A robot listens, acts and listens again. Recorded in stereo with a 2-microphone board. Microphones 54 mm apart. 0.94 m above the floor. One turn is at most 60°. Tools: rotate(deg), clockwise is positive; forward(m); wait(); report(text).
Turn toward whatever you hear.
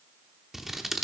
rotate(30)
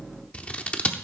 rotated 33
rotate(-25)
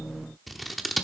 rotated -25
report("Facing the scissors.")